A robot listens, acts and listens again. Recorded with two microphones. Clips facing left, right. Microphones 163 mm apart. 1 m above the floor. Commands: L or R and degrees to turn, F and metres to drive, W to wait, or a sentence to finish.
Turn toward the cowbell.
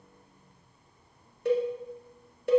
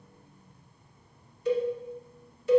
L60
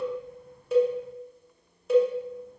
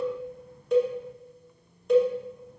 Found it: a cowbell, straight ahead.